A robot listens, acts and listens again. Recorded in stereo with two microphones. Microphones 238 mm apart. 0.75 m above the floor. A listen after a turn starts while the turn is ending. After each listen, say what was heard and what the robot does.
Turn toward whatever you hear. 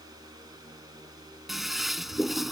Turn 30° left.
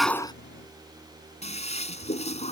So it is at 155° left. Turn 155° left.
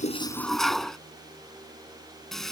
Facing the toilet flushing.